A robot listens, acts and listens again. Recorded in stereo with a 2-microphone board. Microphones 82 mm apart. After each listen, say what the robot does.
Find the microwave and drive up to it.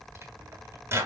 Turn 30° right.
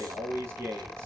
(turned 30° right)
Keep listening.
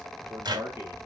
Turn 115° right.
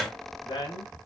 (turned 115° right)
Drive 1.0 m forward.
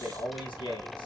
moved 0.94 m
Keep listening.
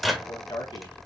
Drive 1.0 m forward.
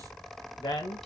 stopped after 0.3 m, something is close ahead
Keep listening.
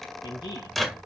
I am next to the microwave.